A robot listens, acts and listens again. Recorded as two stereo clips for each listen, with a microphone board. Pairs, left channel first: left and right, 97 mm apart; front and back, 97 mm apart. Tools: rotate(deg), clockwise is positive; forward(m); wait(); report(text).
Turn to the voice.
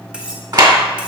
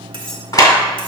wait()
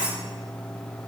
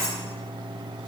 wait()
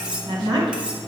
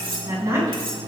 rotate(120)
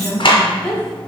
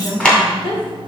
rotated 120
rotate(-10)
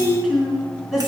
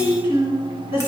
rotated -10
report("Facing the woman speaking.")